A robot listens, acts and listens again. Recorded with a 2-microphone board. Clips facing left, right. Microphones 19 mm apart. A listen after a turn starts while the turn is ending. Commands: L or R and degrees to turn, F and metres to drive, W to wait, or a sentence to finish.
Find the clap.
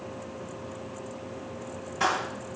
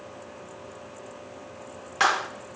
R45
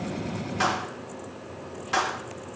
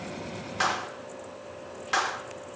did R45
Facing the clap.